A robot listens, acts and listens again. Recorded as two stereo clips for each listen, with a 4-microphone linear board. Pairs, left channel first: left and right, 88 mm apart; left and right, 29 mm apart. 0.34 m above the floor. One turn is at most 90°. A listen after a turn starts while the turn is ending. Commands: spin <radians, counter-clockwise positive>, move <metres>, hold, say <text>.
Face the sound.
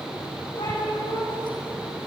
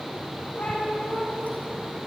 spin 1.13
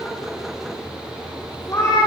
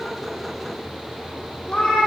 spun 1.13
spin 0.61
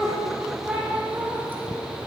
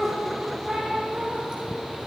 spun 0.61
spin -0.35
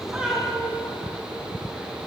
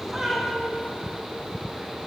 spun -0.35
spin -0.17
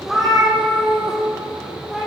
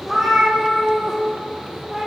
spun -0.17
say Facing the cat meowing, over 4 m away.